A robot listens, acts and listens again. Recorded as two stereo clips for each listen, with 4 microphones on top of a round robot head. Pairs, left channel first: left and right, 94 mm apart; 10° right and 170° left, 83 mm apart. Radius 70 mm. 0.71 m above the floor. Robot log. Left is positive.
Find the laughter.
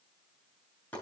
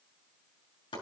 cmd idle
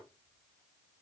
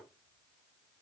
cmd idle
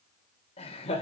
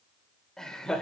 note: The laughter: 70° left.
cmd yaw +70
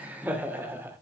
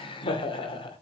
note: The laughter is now 20° right.
cmd yaw -20
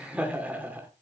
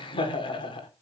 note: The laughter is now 15° right.
cmd yaw -15
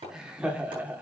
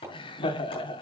note: The laughter is now 15° right.
cmd yaw -15
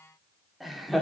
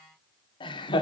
end: Found it: laughter, straight ahead.